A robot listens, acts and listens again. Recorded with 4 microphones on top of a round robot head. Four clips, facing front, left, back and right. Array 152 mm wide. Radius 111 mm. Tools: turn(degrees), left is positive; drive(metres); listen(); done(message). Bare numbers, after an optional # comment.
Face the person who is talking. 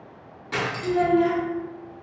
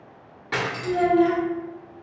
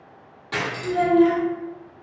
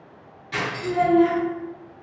# The child speaking: 95° right.
turn(-95)
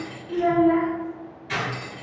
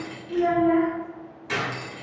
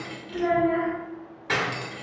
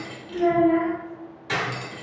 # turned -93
done("Found it: a child speaking, straight ahead, 1 to 2 m away.")